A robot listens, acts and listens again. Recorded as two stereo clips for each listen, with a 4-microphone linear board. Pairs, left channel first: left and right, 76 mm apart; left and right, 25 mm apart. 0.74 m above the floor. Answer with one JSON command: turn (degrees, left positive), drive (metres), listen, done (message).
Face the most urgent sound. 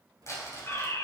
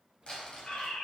{"turn": 40}
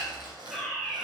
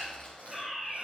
{"done": "Found it: a fire alarm, straight ahead, over 4 m away."}